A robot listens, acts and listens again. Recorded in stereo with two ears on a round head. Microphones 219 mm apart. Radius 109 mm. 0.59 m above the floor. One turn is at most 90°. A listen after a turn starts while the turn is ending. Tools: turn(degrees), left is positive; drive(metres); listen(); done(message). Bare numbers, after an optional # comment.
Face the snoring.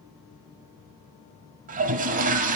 listen()
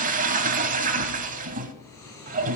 turn(30)
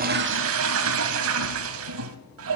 listen()
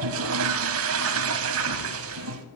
listen()
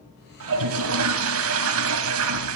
done("I heard snoring, but can't make it out now. It was about 20° right or 140° left.")